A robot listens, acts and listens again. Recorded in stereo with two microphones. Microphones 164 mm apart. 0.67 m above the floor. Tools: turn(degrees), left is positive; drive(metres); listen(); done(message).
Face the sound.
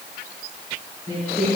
turn(degrees=55)
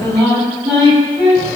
done("Facing the singing.")